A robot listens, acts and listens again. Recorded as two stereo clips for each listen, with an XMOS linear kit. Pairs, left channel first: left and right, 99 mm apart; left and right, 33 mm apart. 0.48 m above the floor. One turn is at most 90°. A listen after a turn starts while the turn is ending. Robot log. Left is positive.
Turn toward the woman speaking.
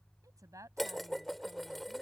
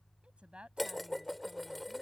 note: The woman speaking: about 35° right or 145° right.
cmd yaw -35
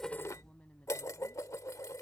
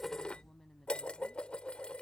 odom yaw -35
note: So it is at 15° left.
cmd yaw +15
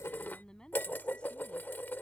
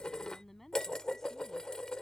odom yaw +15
note: The woman speaking is now 10° left.
cmd yaw +10
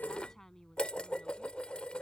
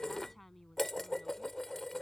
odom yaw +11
end: Facing the woman speaking.